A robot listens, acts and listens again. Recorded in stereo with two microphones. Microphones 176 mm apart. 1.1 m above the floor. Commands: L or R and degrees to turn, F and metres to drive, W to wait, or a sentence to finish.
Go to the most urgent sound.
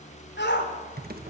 L90
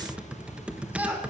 R10
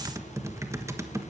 W
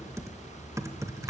W
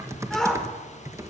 F1.0
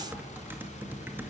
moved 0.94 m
W
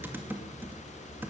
W
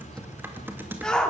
F1.0
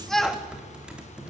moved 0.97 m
F1.0
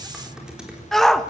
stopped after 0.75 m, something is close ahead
Arrived at the shout, straight ahead.